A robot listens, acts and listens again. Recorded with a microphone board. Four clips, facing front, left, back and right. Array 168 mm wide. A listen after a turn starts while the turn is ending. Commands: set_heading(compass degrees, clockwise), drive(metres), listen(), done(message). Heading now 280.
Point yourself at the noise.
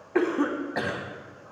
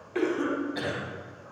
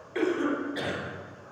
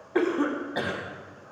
set_heading(320)
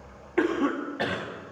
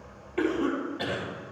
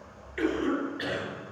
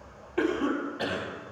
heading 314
done("Facing the cough, 2 to 4 m away.")